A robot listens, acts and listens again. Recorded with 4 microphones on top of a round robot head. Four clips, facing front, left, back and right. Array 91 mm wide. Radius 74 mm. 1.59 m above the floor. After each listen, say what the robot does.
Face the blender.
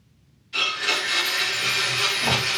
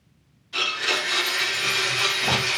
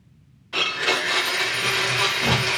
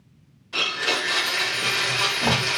Turn 165° right.
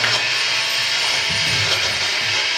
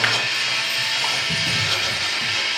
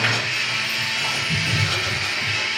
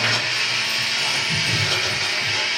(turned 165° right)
Turn 20° right.
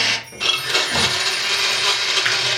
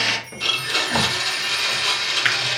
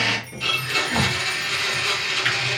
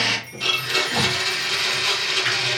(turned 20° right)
Found it: a blender, straight ahead, under 1 m away.